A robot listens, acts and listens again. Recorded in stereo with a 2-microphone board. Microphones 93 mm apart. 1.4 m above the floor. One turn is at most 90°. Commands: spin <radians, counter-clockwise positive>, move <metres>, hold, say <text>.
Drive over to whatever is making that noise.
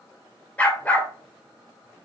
spin 0.35
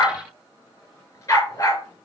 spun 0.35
spin 1.57
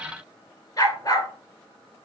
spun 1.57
spin 0.70
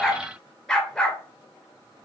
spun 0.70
move 1.0
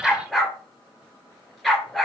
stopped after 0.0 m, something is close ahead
say Blocked. The dog barking is further on, straight ahead.